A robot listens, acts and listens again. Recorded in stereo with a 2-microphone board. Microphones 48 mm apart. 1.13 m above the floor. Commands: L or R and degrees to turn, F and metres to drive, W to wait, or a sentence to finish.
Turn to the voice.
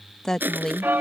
L30
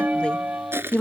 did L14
L155
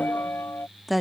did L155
Facing the woman speaking.